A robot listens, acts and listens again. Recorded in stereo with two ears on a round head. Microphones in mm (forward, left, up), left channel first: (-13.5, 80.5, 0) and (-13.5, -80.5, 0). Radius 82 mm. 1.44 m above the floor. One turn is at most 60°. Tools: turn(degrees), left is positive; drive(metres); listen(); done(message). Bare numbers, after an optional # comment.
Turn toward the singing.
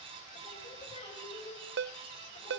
# The singing: about 35° left or 145° left.
turn(35)
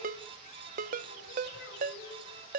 # So it is at 110° left.
turn(60)
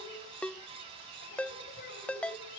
# The singing is now 50° left.
turn(50)
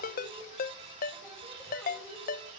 listen()
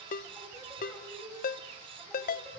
done("Facing the singing.")